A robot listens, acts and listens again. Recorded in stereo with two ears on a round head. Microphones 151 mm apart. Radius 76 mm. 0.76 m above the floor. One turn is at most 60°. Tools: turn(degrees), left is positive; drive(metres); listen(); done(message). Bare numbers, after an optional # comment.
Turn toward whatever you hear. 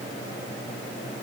listen()
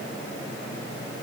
listen()
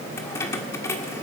# The keys jangling: about 15° left or 165° left.
turn(15)
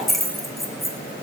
done("Facing the keys jangling, 1 to 2 m away.")